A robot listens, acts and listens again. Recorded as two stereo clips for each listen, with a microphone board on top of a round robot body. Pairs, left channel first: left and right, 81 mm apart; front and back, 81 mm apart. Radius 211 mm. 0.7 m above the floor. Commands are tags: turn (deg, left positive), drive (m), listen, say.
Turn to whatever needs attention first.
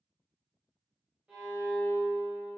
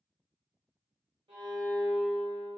<listen/>
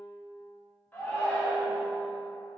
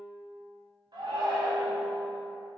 <turn deg="160"/>
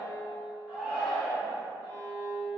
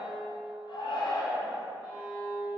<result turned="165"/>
<say>Facing the shout, 1 to 2 m away.</say>